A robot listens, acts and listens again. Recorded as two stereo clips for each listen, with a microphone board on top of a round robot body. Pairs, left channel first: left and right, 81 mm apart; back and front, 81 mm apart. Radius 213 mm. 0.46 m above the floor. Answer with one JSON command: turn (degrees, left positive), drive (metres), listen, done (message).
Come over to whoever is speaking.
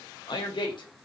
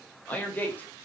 {"turn": 110}
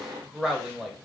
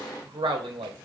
{"drive": 1.0}
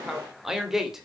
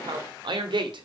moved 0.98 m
{"drive": 1.0}
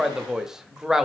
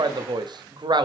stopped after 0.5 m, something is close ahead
{"done": "Arrived at the man speaking, straight ahead."}